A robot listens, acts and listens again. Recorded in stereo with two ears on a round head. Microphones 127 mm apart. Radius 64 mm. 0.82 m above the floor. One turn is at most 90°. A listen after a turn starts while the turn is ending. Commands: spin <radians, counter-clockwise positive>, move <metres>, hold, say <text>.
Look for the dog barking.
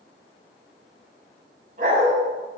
spin -1.22
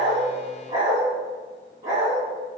spin -0.35
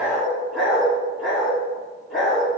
say Facing the dog barking.